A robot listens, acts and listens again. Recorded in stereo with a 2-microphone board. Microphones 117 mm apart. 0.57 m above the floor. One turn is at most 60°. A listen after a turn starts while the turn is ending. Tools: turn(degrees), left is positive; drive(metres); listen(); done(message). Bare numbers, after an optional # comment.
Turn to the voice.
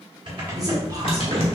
# The man speaking: about 30° right or 150° right.
turn(-30)
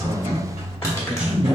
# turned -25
# So it is at 15° right.
turn(-15)
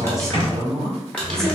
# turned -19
done("Facing the man speaking, 1 to 2 m away.")